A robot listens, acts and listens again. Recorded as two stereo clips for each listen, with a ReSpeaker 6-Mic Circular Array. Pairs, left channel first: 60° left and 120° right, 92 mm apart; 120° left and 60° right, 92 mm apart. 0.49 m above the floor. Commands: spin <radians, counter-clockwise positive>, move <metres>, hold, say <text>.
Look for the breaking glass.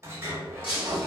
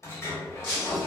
spin 1.05
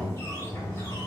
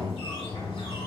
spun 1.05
say I heard breaking glass from this way, but can't make it out now.